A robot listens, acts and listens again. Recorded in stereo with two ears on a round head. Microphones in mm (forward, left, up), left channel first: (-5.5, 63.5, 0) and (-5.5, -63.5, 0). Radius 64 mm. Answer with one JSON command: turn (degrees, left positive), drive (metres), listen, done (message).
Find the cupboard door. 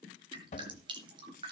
{"turn": 55}
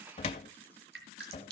{"turn": 55}
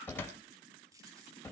{"turn": 15}
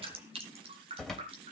{"done": "Found it: a cupboard door, straight ahead, 2 to 4 m away."}